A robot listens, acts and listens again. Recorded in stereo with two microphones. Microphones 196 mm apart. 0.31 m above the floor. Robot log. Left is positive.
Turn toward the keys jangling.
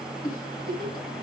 cmd idle
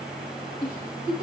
cmd idle
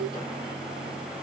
end: I can't make out keys jangling to turn to.